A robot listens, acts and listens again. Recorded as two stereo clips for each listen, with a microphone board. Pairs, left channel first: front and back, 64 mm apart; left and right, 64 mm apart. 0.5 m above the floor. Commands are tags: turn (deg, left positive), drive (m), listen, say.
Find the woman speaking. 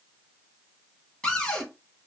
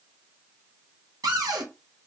<listen/>
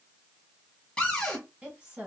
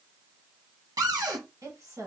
<turn deg="-110"/>
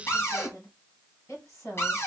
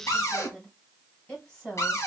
<turn deg="25"/>
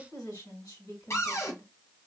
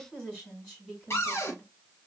<turn deg="15"/>
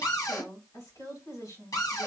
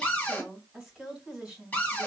<say>Found it: a woman speaking, straight ahead, 2 to 4 m away.</say>